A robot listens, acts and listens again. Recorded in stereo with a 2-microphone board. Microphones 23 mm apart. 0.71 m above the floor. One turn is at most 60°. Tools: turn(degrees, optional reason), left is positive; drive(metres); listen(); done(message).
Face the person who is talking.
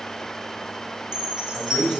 turn(degrees=60, reason="The man speaking: about 65° left or 115° left.")
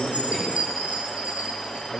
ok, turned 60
turn(degrees=10, reason="So it is at 10° left.")
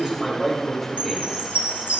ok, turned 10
done("Facing the man speaking, 2 to 4 m away.")